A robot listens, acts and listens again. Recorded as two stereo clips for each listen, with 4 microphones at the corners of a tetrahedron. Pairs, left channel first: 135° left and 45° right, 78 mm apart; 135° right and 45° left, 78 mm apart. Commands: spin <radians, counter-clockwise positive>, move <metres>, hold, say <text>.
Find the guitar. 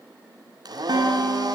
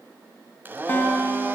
spin -1.13
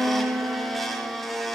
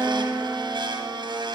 say Facing the guitar, 2 to 4 m away.